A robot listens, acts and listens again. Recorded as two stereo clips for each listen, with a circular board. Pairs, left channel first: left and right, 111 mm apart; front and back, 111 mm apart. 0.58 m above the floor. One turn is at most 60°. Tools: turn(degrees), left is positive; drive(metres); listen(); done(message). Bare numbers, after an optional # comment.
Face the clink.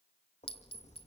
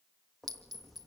# The clink: 125° left.
turn(60)
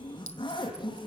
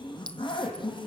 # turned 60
# The clink is now 80° left.
turn(60)
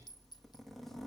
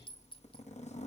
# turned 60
# Nothing new. It was at 20° left.
turn(20)
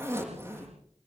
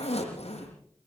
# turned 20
listen()
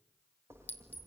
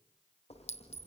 # The clink is now 15° left.
turn(15)
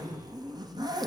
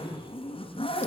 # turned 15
listen()
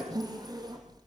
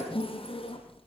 listen()
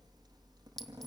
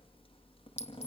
done("Found it: a clink, straight ahead, 2 to 4 m away.")